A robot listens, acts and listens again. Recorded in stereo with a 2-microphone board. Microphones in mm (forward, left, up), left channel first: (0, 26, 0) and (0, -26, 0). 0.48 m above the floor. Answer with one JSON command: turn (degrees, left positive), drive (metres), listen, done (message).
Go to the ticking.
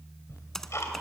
{"turn": 65}
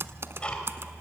{"turn": 25}
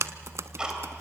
{"turn": -15}
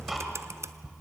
{"drive": 1.0}
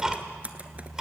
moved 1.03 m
{"turn": -15}
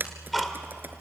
{"drive": 1.0}
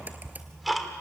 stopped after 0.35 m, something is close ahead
{"done": "I am next to the ticking."}